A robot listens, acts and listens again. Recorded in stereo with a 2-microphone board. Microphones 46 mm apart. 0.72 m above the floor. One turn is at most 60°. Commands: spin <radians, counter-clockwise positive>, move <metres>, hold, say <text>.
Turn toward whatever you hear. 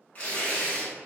spin 0.52
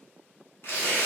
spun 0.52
spin 1.05
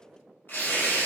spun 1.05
spin 0.87
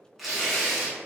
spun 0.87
say Facing the tearing paper, 1 to 2 m away.